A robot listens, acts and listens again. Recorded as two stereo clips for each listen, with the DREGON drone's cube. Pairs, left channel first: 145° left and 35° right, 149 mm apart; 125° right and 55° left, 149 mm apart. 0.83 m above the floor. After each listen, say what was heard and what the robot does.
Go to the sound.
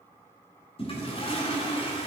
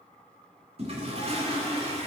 The toilet flushing: 100° left. Turn 100° left.
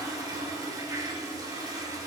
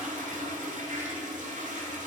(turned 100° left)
The toilet flushing is now 30° left. Turn 30° left.
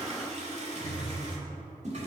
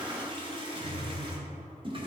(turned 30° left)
Drive 1.0 m forward.
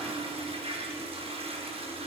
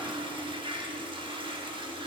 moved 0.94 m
Drive 1.0 m forward.
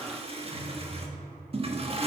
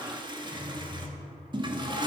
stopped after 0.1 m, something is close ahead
Arrived at the toilet flushing, straight ahead.